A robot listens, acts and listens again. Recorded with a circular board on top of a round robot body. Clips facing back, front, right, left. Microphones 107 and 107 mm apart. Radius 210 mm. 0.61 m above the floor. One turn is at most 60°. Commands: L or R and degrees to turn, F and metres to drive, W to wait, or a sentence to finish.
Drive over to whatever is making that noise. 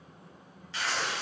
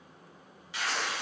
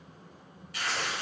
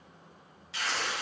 L60
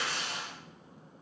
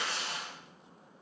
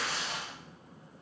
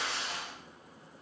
F1.0
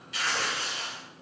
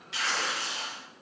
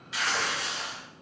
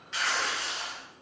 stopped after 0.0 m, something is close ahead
Something is in my way. I am facing the tearing paper but have not reached it.